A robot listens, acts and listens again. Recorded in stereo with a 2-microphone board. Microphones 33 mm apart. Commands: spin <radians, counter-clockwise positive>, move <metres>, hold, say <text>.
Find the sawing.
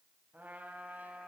hold
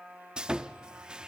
spin -0.52
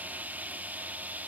spin -2.09
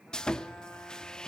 spin 0.44
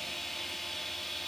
say Facing the sawing, under 1 m away.